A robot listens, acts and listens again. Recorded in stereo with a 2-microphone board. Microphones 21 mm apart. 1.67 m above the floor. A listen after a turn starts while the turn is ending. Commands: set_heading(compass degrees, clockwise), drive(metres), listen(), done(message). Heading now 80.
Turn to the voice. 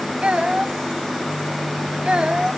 set_heading(135)
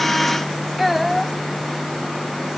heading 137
done("Facing the child speaking.")